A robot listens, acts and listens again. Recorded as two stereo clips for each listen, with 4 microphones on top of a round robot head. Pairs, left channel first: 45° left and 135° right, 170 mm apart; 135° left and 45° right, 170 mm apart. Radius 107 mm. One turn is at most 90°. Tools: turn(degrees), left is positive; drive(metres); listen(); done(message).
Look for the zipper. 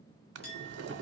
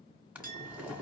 listen()
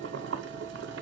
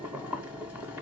listen()
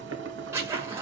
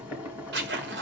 turn(degrees=-60)
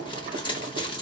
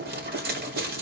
turn(degrees=-15)
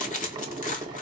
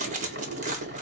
done("Facing the zipper.")